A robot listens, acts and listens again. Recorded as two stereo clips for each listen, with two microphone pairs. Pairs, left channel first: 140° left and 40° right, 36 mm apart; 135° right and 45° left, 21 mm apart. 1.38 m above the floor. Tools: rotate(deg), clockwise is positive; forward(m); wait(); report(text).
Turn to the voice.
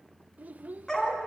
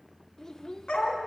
rotate(70)
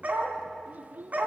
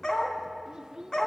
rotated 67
report("Found it: a child speaking, straight ahead, under 1 m away.")